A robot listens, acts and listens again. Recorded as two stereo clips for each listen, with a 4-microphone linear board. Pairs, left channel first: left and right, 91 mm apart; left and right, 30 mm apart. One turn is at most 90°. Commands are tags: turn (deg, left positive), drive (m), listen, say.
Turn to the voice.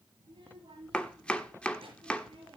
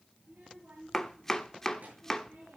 <turn deg="-70"/>
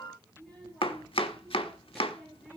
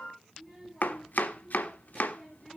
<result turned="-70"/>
<say>Facing the child speaking.</say>